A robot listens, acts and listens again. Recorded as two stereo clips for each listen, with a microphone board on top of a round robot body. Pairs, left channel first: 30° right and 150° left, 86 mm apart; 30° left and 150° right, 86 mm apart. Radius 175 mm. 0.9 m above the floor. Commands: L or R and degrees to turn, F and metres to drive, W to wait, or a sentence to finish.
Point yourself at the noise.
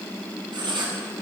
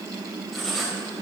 L120
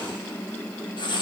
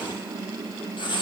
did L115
Found it: writing, straight ahead, 2 to 4 m away.